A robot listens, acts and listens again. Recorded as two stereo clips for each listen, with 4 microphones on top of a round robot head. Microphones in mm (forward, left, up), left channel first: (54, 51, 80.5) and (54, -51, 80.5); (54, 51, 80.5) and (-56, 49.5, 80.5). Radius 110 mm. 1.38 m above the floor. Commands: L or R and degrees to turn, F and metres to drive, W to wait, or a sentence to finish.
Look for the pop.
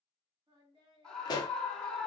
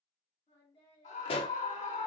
L40
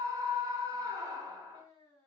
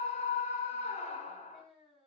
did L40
Facing where the pop came from. I can't hear it now.